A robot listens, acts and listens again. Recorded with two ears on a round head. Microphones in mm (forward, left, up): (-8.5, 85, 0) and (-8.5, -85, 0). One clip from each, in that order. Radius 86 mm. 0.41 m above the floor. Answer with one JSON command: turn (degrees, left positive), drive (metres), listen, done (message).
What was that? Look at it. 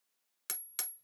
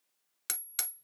{"turn": -30}
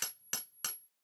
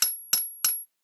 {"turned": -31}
{"turn": -145}
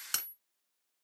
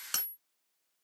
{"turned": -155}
{"turn": 10}
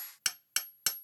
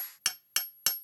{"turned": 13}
{"done": "Facing the hammering."}